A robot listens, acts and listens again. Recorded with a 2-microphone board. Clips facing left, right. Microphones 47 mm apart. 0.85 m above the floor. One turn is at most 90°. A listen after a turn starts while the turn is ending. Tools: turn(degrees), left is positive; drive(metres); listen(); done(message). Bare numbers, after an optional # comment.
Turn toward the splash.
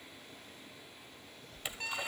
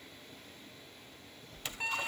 turn(30)
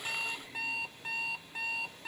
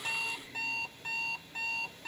# So it is at 140° left.
turn(90)
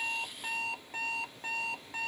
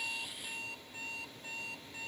# Nothing new. It was at 50° left.
turn(50)
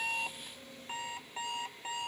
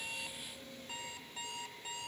done("Facing where the splash came from. I can't hear it now.")